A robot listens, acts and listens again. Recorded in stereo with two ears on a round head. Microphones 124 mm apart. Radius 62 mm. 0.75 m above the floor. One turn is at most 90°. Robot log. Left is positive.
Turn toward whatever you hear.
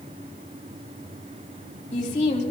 note: The woman speaking: about 60° left or 120° left.
cmd yaw +60
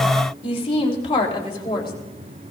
note: So it is at 40° left.
cmd yaw +40
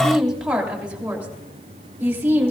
note: The woman speaking is now 15° right.
cmd yaw -15
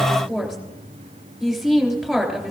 end: Facing the woman speaking.